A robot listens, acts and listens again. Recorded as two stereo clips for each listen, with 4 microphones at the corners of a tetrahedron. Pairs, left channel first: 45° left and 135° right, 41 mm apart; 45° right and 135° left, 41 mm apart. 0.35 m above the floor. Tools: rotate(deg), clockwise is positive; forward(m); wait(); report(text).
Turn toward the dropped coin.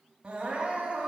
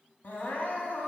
wait()
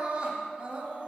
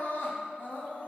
wait()
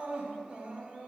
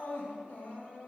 report("I can't make out a dropped coin, only crying.")